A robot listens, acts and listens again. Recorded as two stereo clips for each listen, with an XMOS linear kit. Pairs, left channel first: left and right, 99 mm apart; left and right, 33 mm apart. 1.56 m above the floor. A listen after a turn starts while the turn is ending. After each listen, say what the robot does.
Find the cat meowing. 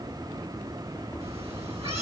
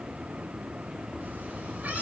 Turn 70° right.
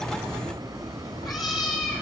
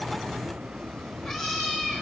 Found it: a cat meowing, straight ahead, over 4 m away.